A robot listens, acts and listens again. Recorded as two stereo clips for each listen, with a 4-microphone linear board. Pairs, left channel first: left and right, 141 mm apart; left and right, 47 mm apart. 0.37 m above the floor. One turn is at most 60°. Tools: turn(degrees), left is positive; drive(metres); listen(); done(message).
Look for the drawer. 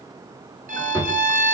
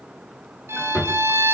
turn(degrees=30)
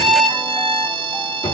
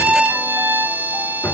turn(degrees=60)
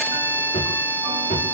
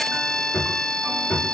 turn(degrees=60)
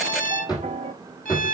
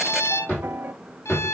turn(degrees=30)
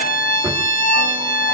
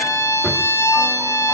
listen()
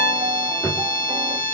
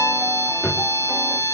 turn(degrees=15)
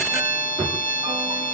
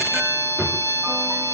done("Facing the drawer.")